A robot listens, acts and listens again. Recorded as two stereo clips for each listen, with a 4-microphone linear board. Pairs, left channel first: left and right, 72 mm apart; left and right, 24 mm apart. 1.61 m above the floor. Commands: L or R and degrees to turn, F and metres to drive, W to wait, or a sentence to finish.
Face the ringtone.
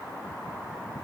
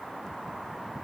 W
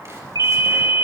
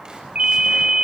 R60
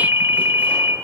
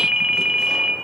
R45
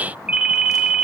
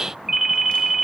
R15
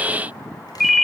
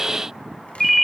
Found it: a ringtone, straight ahead.